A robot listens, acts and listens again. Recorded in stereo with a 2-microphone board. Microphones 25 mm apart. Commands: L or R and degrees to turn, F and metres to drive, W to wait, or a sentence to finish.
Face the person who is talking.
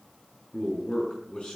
L45
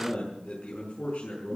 L90
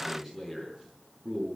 R10
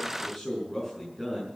Facing the man speaking.